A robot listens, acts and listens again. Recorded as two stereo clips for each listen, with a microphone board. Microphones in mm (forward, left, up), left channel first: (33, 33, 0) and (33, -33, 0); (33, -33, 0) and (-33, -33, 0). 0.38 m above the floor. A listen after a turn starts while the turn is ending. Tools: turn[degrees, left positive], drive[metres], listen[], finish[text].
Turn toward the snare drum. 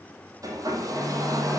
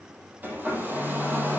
Action: listen[]
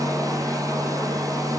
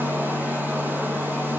Action: listen[]
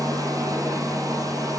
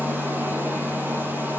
Action: finish[I can't make out a snare drum, only a hair dryer.]